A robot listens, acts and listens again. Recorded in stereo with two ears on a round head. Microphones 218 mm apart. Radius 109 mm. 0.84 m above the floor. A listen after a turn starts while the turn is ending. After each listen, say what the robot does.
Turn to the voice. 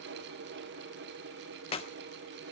Keep listening.
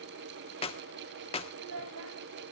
Turn 75° right.
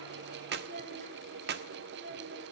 Turn 40° right.
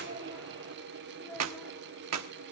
Found it: a child speaking, straight ahead.